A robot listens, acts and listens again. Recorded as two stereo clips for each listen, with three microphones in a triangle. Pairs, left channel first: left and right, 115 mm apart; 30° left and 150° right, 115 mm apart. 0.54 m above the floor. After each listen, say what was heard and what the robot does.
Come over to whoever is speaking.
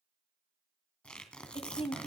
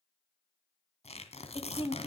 The woman speaking: 65° left. Turn 65° left.
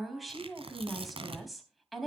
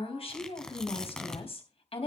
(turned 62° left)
Drive 1.0 m forward.
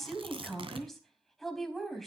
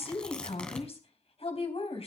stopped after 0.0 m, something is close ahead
Something is in my way. I am facing the woman speaking but have not reached it.